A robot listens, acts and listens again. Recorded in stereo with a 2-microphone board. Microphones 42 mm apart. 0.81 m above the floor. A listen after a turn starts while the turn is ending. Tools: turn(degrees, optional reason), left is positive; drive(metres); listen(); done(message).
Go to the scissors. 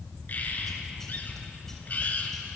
listen()
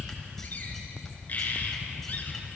listen()
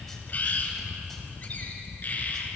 done("I can't make out scissors, only a bird.")